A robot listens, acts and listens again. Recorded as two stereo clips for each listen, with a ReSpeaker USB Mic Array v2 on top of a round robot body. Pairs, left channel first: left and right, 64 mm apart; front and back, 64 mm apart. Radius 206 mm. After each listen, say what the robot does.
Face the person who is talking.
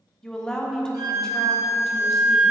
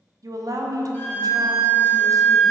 Turn 170° left.
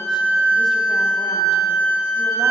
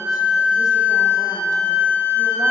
Keep listening.
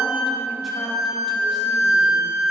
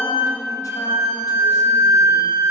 Keep listening.
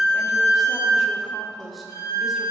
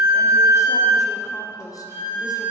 Found it: a woman speaking, straight ahead, 1 to 2 m away.